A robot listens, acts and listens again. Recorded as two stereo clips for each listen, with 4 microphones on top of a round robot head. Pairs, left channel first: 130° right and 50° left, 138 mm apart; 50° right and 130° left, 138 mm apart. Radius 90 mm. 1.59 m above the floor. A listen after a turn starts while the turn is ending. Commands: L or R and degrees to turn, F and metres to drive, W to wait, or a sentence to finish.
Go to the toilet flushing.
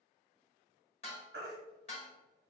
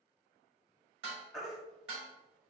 W
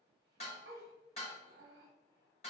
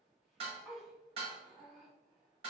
W
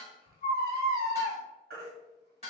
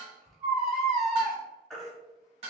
I can't make out a toilet flushing, only dishes clattering and a baby crying.